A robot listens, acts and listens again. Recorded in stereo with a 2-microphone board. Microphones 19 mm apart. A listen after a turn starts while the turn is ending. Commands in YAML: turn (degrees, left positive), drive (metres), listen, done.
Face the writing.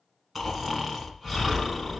listen: true
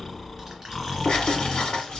turn: 55
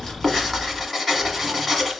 done: "Found it: writing, straight ahead, 1 to 2 m away."